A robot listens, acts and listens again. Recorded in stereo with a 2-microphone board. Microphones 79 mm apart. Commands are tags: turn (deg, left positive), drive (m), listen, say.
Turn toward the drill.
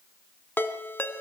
<listen/>
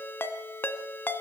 <listen/>
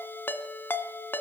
<say>I can't make out a drill to turn to.</say>